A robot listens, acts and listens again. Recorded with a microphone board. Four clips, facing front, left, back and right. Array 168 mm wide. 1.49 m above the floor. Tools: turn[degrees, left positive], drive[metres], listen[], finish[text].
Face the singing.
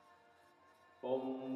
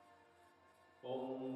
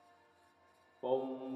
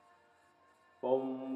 Thought: The singing: 110° right.
Action: turn[-110]
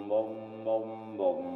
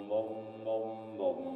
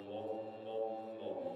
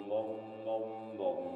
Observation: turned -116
Action: finish[Facing the singing.]